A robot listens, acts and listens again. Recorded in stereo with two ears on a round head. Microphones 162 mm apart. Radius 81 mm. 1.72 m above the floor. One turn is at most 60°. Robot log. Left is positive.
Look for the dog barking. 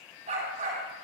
note: The dog barking: about 40° right or 140° right.
cmd yaw -40
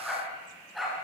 end: Found it: a dog barking, straight ahead.